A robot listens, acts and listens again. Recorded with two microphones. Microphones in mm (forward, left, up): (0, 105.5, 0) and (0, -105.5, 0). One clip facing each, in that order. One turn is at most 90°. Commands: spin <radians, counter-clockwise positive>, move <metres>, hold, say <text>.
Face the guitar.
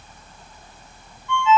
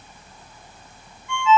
hold
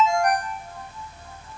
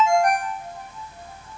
hold
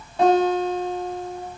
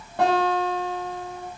spin -1.13
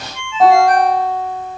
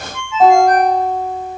say Facing the guitar, over 4 m away.